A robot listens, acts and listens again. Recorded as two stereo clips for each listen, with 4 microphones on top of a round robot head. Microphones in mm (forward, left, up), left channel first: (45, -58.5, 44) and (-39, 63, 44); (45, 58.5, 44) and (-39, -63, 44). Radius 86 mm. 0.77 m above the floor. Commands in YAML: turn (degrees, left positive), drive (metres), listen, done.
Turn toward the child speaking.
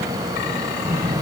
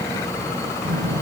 turn: -155
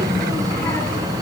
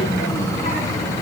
turn: 15
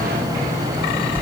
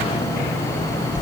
done: "Facing the child speaking, over 4 m away."